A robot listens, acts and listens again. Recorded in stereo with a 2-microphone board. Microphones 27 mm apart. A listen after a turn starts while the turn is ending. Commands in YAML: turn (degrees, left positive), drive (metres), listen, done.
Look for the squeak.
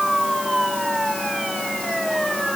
listen: true
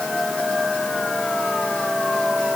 listen: true
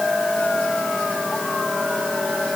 done: "I can't make out a squeak to turn to."